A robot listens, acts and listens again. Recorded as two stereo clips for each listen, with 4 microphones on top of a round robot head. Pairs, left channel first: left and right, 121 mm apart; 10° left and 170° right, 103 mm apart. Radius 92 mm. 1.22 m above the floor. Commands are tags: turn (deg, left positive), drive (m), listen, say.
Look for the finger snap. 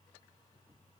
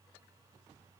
<listen/>
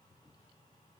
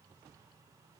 <listen/>
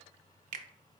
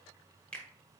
<turn deg="-70"/>
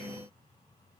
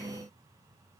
<listen/>
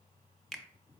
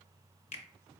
<say>Facing the finger snap, under 1 m away.</say>